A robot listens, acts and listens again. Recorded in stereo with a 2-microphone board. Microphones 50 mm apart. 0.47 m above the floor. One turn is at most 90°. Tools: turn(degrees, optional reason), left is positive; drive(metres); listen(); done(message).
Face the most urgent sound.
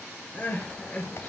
turn(degrees=25, reason="The crying: about 25° left or 155° left.")
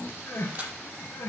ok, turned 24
turn(degrees=90, reason="So it is at 130° left.")
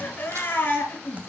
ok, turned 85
turn(degrees=45, reason="The crying is now 45° left.")
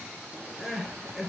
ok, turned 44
done("Found it: crying, straight ahead.")